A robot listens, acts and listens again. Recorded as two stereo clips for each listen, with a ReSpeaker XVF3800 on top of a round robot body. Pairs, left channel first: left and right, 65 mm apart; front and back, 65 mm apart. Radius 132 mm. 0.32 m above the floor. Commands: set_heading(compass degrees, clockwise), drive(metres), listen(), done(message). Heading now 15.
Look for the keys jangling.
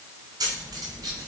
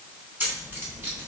set_heading(130)
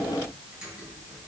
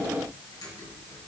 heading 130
listen()
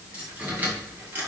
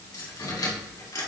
set_heading(155)
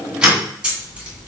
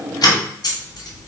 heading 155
set_heading(170)
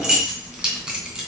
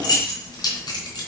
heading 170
set_heading(180)
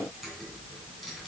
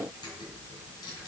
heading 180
listen()
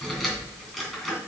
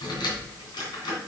done("Facing the keys jangling.")